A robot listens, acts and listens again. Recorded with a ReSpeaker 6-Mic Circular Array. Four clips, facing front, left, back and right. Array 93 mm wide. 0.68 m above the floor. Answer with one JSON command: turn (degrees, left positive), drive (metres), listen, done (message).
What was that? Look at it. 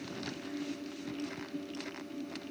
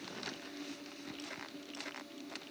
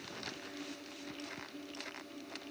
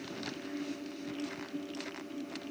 {"listen": true}
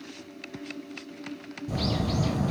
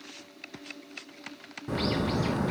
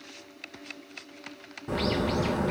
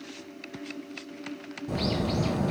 {"turn": 145}
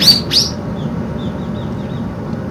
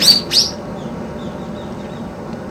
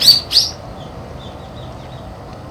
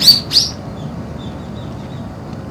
{"turn": 15}
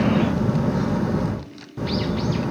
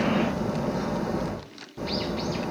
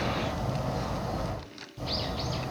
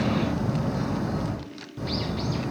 {"done": "Found it: a bird, straight ahead, 2 to 4 m away."}